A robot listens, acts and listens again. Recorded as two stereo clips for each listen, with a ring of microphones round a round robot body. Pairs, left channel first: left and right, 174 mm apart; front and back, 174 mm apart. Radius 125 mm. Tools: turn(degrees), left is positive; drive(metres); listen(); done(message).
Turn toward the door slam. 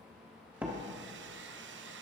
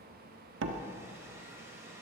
turn(degrees=-175)
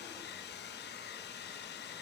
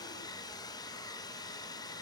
done("Facing where the door slam came from. I can't hear it now.")